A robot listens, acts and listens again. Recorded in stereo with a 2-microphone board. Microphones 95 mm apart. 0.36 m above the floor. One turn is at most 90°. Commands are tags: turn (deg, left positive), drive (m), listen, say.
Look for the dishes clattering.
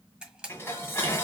<turn deg="25"/>
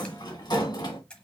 <turn deg="90"/>
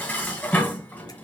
<turn deg="20"/>
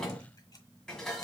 <turn deg="10"/>
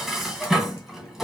<say>Found it: dishes clattering, straight ahead, 1 to 2 m away.</say>